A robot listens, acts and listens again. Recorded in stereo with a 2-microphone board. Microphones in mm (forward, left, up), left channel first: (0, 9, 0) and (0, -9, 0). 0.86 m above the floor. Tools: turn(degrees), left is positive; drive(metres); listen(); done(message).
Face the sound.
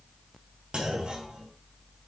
turn(degrees=-90)
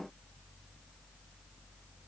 done("I heard a clunk from this way, but can't make it out now.")